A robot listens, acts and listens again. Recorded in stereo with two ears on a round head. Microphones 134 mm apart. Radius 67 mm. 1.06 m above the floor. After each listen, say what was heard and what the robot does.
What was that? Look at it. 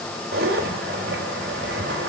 The zipper: about 70° right or 110° right. Turn 70° right.
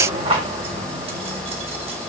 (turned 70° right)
So it is at 35° right. Turn 35° right.
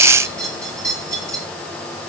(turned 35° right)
The zipper is now 20° right. Turn 20° right.
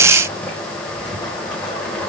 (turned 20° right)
Found it: a zipper, straight ahead, over 4 m away.